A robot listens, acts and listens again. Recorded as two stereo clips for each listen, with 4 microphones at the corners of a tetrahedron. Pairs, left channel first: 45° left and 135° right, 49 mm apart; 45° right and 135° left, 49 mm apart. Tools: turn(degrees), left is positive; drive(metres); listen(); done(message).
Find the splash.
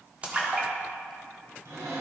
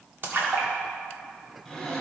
turn(degrees=165)
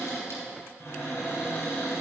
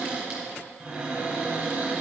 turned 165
done("I heard a splash from this way, but can't make it out now.")